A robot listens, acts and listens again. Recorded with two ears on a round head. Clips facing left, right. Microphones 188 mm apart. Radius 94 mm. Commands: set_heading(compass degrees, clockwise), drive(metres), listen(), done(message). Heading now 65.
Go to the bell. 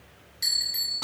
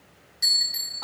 set_heading(95)
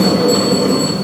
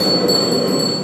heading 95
listen()
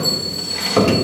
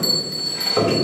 set_heading(240)
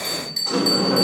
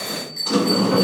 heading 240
set_heading(215)
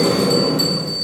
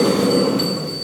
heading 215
set_heading(205)
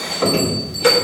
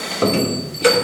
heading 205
drive(1.0)
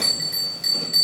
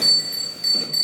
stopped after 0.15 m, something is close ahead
done("Blocked. The bell is further on, straight ahead.")